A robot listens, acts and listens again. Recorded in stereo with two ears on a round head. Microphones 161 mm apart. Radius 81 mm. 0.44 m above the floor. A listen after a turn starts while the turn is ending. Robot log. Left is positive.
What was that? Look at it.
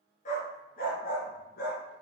note: The dog barking: about 60° left or 120° left.
cmd yaw +60
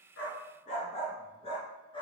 note: So it is at 30° left.
cmd yaw +30
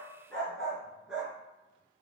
end: Facing the dog barking.